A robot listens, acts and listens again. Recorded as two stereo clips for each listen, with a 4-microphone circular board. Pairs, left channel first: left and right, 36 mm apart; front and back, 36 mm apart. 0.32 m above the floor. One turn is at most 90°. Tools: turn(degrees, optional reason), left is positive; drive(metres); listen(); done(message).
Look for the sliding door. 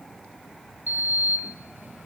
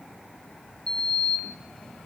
turn(degrees=-65, reason="The sliding door: 65° right.")
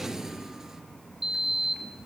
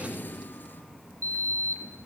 turn(degrees=-15, reason="The sliding door is now 15° right.")
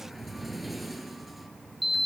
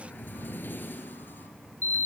done("Found it: a sliding door, straight ahead, 2 to 4 m away.")